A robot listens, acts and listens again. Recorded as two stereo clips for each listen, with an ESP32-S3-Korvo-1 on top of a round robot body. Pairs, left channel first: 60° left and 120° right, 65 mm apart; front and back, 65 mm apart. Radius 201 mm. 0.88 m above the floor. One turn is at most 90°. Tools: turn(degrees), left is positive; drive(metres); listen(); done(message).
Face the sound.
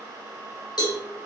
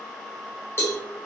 turn(degrees=50)
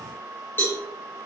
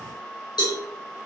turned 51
done("Found it: a cowbell, straight ahead, 2 to 4 m away.")